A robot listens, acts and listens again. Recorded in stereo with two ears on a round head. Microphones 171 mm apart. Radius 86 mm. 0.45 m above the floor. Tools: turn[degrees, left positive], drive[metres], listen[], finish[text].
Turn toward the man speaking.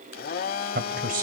Thought: The man speaking: about 45° right or 135° right.
Action: turn[-45]
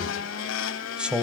Action: finish[Found it: a man speaking, straight ahead.]